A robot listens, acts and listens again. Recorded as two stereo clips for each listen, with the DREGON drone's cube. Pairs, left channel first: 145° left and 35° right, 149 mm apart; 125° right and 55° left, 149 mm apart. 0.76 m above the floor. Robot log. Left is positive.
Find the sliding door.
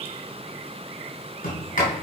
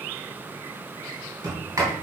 note: The sliding door: 125° left.
cmd yaw +125
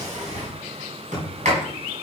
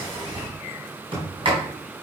end: Facing the sliding door, 2 to 4 m away.